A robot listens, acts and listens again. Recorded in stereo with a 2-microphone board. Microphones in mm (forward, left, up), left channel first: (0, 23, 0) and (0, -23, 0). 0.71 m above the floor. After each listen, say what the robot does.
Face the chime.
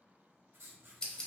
Keep listening.
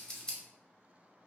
Keep listening.
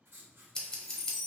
Turn 30° left.
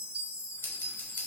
Turn 30° right.
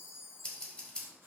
Facing the chime.